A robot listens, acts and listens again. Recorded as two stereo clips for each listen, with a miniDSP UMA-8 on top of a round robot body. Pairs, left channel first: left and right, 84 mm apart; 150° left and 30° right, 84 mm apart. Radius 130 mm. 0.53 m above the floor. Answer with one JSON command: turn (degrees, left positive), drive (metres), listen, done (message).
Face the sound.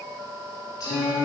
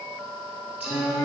{"turn": 35}
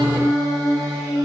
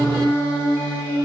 {"done": "Found it: singing, straight ahead."}